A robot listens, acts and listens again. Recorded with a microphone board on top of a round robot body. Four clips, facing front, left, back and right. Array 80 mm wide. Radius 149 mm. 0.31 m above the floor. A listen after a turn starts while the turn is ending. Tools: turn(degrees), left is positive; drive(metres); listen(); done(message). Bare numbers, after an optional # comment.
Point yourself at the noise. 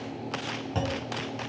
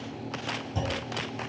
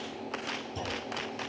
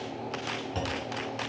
# The clunk: 20° right.
turn(-20)
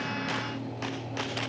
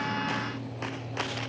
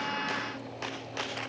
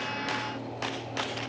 done("I heard a clunk from this way, but can't make it out now.")